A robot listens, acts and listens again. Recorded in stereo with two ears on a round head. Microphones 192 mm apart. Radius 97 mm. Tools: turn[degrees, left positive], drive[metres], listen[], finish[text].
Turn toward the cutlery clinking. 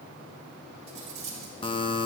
Thought: The cutlery clinking: about 35° right or 145° right.
Action: turn[-35]
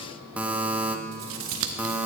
Thought: So it is at 110° right.
Action: turn[-110]
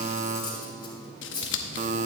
Thought: The cutlery clinking is now 20° left.
Action: turn[20]
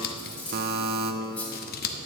Action: finish[Found it: cutlery clinking, straight ahead.]